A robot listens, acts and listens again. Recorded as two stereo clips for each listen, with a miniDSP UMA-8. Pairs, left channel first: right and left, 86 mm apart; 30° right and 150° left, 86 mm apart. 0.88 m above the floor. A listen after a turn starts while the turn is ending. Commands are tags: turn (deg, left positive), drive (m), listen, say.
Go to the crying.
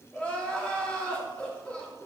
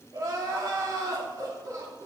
<turn deg="-165"/>
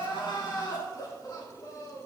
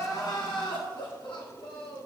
<turn deg="-50"/>
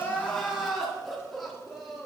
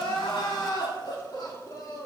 <drive m="1.0"/>
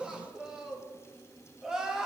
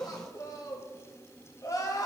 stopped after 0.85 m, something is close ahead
<turn deg="10"/>
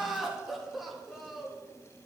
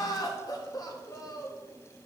<say>Arrived at the crying, straight ahead.</say>